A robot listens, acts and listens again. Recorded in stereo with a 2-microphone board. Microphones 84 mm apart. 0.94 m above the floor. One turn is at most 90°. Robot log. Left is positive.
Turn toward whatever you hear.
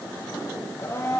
note: The blender: about 30° left or 150° left.
cmd yaw +30
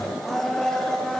end: Found it: a blender, straight ahead, 1 to 2 m away.